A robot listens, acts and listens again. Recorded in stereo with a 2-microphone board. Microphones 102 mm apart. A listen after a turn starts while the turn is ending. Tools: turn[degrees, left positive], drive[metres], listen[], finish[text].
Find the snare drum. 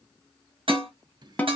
Action: turn[30]
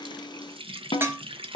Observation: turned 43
Thought: So it is at 120° left.
Action: turn[120]
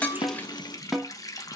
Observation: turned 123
Action: finish[Found it: a snare drum, straight ahead.]